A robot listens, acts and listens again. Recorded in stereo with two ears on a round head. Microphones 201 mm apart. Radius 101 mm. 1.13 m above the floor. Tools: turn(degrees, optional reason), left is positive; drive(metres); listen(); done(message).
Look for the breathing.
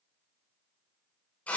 listen()
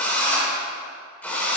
listen()
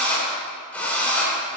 done("I can't make out breathing, only a drill.")